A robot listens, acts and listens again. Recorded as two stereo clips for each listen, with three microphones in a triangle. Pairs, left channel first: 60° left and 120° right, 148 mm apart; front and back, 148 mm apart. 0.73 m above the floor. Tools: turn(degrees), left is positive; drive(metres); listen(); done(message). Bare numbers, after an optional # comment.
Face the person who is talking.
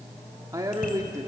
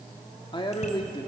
# The man speaking: 55° right.
turn(-55)
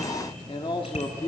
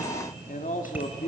# The man speaking is now 10° left.
turn(10)
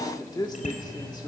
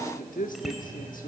done("Facing the man speaking, 1 to 2 m away.")